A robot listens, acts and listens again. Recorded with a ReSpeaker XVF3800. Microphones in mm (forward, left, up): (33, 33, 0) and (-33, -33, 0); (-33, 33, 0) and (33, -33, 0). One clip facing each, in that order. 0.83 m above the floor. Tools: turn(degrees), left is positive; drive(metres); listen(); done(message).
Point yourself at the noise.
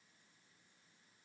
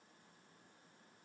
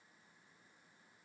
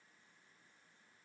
listen()
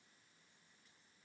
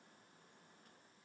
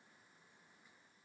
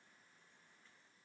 listen()
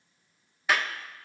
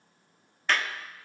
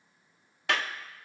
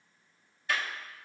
turn(degrees=130)
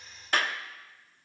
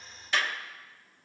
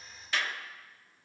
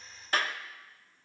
done("Facing the clap.")